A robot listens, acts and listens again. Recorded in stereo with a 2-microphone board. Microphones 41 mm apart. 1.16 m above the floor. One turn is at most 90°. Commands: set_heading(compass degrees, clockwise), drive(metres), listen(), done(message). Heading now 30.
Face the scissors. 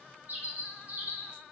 listen()
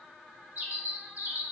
listen()
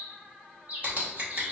set_heading(65)
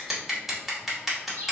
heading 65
done("Found it: scissors, straight ahead, 1 to 2 m away.")